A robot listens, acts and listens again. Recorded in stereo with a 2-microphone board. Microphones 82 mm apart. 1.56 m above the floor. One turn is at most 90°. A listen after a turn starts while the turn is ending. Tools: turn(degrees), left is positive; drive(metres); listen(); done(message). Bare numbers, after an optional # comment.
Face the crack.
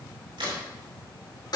turn(-90)
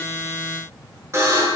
done("I heard a crack from this way, but can't make it out now.")